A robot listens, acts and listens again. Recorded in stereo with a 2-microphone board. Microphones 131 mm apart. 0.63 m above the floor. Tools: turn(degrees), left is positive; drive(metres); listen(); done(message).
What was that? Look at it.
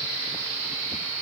listen()
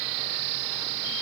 listen()
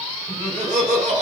turn(degrees=-75)
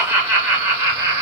turn(degrees=-25)
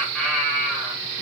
done("Facing the laughter.")